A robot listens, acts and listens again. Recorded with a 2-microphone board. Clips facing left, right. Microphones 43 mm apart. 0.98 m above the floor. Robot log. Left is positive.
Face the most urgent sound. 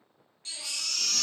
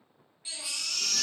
cmd yaw -30
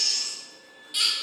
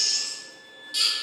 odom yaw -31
note: So it is at 20° left.
cmd yaw +20
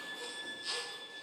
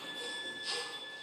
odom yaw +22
cmd idle
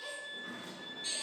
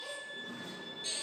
cmd idle
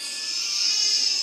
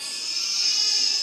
end: Facing the baby crying.